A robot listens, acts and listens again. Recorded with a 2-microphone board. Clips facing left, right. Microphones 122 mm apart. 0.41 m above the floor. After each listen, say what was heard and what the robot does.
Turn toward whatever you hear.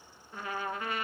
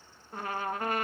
The trumpet: about 50° right or 130° right. Turn 50° right.
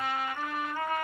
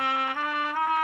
So it is at 80° right. Turn 80° right.
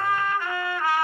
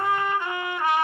The trumpet is now 20° right. Turn 20° right.
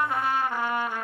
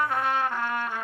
Found it: a trumpet, straight ahead.